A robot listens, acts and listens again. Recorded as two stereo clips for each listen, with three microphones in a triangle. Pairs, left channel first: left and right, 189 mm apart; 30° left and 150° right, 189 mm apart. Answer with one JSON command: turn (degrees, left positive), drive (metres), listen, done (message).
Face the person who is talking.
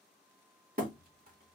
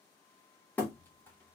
{"listen": true}
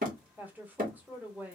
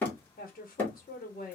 {"turn": -10}
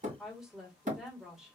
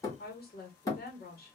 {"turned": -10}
{"done": "Found it: a woman speaking, straight ahead, 1 to 2 m away."}